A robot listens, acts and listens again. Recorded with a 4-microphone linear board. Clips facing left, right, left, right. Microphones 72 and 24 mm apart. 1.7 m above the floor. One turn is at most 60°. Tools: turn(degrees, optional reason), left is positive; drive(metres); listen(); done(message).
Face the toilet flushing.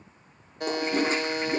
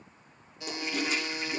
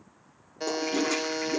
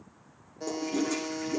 turn(degrees=35, reason="The toilet flushing: about 35° left or 145° left.")
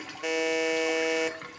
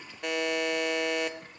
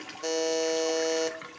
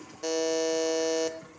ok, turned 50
listen()
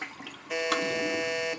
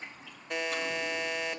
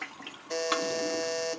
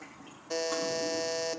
turn(degrees=60, reason="So it is at 95° left.")
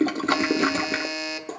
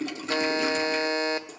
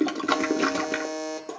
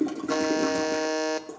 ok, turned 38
turn(degrees=55, reason="The toilet flushing is now 55° left.")
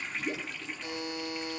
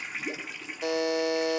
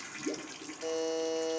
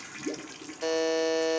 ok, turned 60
done("Found it: a toilet flushing, straight ahead.")